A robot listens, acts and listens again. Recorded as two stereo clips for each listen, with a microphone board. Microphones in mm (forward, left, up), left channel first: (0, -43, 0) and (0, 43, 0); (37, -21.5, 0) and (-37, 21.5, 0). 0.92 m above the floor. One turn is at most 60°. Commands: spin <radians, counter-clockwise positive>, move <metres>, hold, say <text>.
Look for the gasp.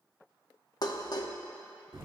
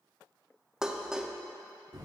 hold
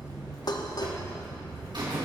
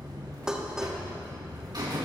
hold
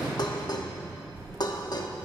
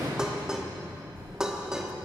say I can't make out a gasp to turn to.